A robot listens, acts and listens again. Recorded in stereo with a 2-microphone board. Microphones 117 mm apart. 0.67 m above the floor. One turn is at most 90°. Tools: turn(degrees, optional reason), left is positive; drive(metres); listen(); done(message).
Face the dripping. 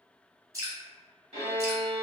turn(degrees=-30, reason="The dripping: about 30° right or 150° right.")
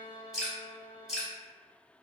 done("Found it: dripping, straight ahead, 1 to 2 m away.")